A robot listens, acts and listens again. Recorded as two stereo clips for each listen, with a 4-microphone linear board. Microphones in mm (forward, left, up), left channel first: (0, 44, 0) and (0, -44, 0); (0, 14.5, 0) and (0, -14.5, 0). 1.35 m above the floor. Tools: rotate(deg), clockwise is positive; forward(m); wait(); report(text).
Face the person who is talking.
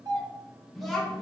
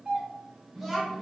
rotate(-30)
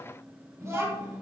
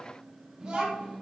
rotate(30)
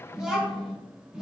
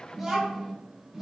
rotate(10)
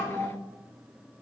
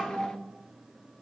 report("Found it: a child speaking, straight ahead, 1 to 2 m away.")